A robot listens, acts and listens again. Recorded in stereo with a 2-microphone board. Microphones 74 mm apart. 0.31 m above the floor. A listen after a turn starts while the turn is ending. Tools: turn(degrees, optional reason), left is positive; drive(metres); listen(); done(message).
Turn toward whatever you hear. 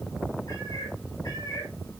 turn(degrees=50, reason="The cat meowing: about 50° left or 130° left.")
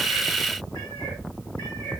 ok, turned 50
turn(degrees=80, reason="So it is at 80° left.")
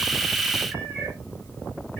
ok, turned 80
turn(degrees=15, reason="The cat meowing is now 15° left.")
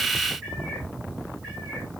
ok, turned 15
done("Facing the cat meowing.")